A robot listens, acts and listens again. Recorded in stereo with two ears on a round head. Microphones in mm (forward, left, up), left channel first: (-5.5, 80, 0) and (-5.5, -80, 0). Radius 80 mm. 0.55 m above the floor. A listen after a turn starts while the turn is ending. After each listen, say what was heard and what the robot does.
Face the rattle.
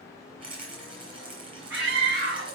The rattle: about 25° right or 155° right. Turn 25° right.
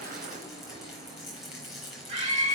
Facing the rattle, over 4 m away.